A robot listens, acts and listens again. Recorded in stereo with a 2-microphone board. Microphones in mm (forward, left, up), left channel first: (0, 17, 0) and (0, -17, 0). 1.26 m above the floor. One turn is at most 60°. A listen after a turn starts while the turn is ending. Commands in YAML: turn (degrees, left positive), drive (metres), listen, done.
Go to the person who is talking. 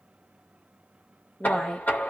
turn: 25
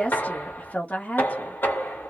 turn: 60
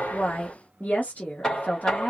turn: 55
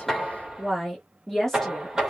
turn: 10
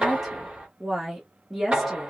drive: 1.0
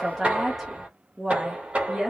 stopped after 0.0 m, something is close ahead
done: "Something is in my way. I am facing the woman speaking but have not reached it."